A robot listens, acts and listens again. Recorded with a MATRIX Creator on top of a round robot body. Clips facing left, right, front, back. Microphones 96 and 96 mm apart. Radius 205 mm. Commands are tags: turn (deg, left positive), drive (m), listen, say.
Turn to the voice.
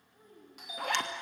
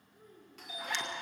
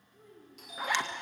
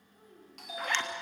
<turn deg="125"/>
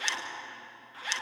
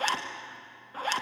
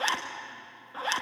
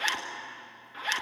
<listen/>
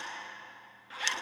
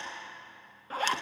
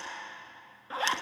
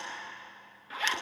<listen/>
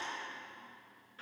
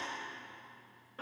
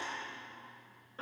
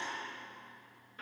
<say>I heard a child speaking from this way, but can't make it out now.</say>